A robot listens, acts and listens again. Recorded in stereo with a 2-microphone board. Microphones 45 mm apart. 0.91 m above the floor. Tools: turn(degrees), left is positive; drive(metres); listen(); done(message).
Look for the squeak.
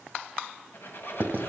turn(degrees=50)
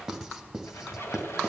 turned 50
turn(degrees=80)
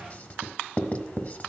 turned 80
listen()
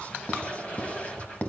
turn(degrees=30)
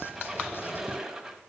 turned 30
turn(degrees=-10)
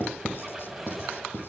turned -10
done("Found it: a squeak, straight ahead, 2 to 4 m away.")